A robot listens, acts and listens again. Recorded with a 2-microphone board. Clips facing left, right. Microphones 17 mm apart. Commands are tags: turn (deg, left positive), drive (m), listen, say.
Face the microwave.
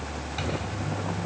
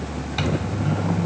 <turn deg="-30"/>
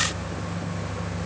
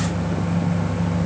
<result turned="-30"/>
<turn deg="-115"/>
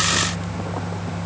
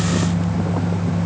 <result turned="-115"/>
<say>Found it: a microwave, straight ahead.</say>